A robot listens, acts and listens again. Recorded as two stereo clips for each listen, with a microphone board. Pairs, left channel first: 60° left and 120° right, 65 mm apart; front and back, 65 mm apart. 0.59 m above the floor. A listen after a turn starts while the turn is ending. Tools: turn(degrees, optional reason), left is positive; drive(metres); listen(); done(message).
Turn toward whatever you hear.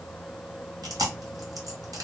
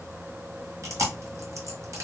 turn(degrees=-140, reason="The chewing: 140° right.")
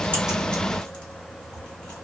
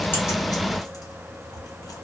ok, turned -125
turn(degrees=-15, reason="Nothing new. It was at 15° right.")
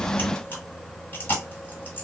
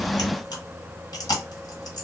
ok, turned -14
done("Found it: chewing, straight ahead.")